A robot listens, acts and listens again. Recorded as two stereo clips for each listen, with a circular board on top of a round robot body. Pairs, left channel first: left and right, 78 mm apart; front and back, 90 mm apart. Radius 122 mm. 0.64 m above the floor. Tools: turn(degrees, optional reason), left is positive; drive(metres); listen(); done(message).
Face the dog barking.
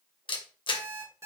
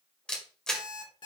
listen()
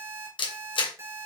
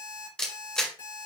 listen()
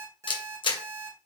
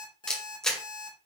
done("I can't make out a dog barking to turn to.")